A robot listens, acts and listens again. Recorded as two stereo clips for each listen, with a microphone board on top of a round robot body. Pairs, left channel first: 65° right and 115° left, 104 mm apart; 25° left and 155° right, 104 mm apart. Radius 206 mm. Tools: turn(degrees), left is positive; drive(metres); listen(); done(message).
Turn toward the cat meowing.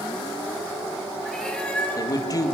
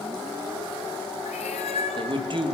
turn(degrees=10)
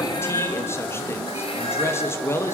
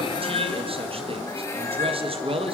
listen()
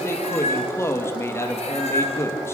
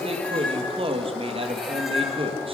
turn(degrees=-70)
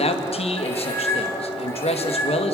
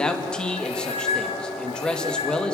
done("Facing the cat meowing.")